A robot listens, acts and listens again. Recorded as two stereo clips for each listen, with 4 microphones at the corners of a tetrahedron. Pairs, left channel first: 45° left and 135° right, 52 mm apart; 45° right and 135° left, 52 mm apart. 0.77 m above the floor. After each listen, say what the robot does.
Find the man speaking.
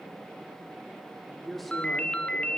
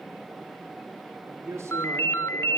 Turn 135° left.
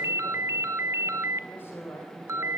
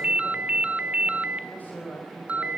Found it: a man speaking, straight ahead, over 4 m away.